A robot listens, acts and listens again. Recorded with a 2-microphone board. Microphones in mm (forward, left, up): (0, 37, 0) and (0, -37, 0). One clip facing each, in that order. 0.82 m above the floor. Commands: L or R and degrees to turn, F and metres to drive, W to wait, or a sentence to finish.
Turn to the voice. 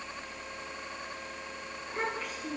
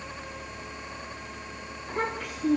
R90
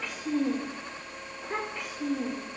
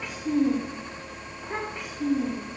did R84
Found it: a child speaking, straight ahead, 2 to 4 m away.